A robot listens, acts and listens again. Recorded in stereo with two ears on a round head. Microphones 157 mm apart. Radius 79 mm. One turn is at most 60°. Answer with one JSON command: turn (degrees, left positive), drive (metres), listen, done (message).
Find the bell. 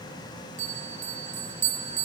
{"turn": -45}
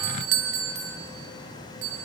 {"turn": -60}
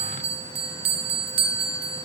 {"turn": -30}
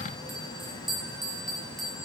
{"done": "Found it: a bell, straight ahead, 1 to 2 m away."}